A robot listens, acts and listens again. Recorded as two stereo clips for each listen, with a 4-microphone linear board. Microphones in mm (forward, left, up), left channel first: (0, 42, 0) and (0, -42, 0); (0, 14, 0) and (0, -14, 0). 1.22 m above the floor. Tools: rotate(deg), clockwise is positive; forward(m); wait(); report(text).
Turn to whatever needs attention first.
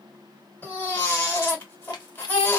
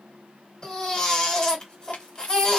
rotate(-25)
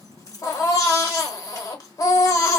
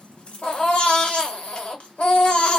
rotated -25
rotate(-125)
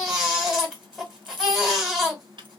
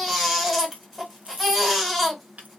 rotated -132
report("Found it: a baby crying, straight ahead, 1 to 2 m away.")